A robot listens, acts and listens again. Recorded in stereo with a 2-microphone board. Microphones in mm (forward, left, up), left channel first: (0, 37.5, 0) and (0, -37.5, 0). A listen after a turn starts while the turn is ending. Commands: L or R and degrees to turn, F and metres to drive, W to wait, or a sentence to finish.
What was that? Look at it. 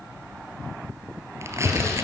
R35
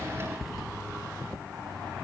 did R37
Facing the tearing paper, 2 to 4 m away.